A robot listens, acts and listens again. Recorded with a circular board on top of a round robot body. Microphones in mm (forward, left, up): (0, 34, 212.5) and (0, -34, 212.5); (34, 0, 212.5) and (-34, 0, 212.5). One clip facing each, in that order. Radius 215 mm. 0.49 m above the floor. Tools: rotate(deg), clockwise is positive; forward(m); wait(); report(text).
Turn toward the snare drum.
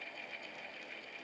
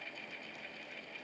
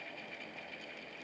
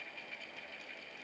wait()
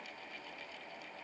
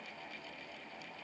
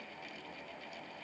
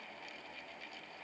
wait()
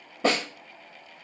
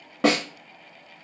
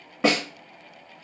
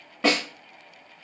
rotate(80)
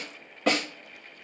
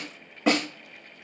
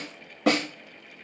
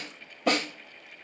report("Found it: a snare drum, straight ahead, 1 to 2 m away.")